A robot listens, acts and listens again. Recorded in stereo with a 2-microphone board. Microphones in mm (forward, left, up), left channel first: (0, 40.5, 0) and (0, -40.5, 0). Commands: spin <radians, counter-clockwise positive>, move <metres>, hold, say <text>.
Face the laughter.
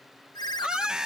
spin -0.52
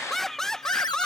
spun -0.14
spin 0.52
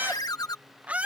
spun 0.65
spin -0.35
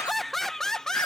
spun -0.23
say Facing the laughter.